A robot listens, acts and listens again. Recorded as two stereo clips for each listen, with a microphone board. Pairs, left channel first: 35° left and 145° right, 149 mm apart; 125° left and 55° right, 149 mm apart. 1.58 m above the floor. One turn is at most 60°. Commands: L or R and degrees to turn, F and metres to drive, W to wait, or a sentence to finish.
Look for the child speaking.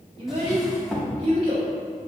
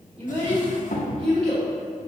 R60
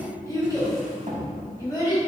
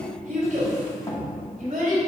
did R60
R30
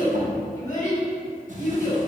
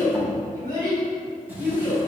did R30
Found it: a child speaking, straight ahead.